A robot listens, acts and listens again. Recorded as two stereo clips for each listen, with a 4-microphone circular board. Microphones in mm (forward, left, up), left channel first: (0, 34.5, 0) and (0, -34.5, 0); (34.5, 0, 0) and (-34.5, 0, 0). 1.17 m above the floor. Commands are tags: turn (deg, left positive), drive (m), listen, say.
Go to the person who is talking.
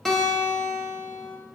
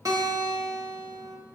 <listen/>
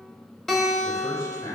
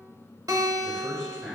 <turn deg="85"/>
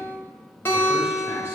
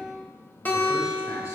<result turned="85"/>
<listen/>
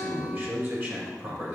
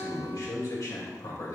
<turn deg="-35"/>
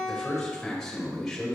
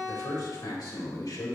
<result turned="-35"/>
<drive m="1.0"/>
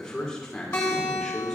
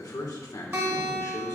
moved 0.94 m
<turn deg="10"/>
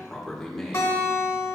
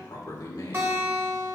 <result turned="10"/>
<drive m="1.0"/>
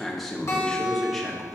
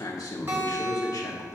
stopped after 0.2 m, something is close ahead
<say>I am next to the man speaking.</say>